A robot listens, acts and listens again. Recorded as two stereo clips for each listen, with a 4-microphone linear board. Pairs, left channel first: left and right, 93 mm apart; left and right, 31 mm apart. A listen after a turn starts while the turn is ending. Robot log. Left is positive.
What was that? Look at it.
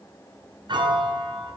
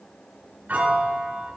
note: The piano: about 60° right or 120° right.
cmd yaw -60
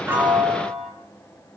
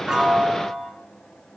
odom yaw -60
end: Found it: a piano, straight ahead, 2 to 4 m away.